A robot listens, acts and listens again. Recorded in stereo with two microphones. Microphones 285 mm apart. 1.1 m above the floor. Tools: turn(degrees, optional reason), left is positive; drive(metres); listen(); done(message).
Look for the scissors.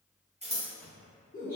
turn(degrees=-20, reason="The scissors: about 20° right or 160° right.")
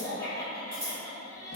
turn(degrees=-140, reason="So it is at 140° right.")
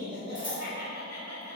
listen()
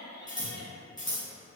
turn(degrees=15, reason="The scissors is now 15° left.")
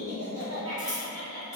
listen()
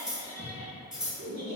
done("Facing the scissors, 1 to 2 m away.")